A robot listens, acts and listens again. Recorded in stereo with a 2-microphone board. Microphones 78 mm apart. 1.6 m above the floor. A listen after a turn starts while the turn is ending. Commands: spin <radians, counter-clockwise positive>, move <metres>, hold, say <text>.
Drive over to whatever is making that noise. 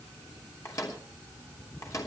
spin 0.70
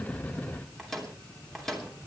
move 1.0
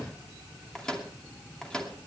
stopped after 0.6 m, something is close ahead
spin 0.17
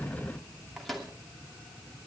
say Blocked. The microwave is further on, straight ahead.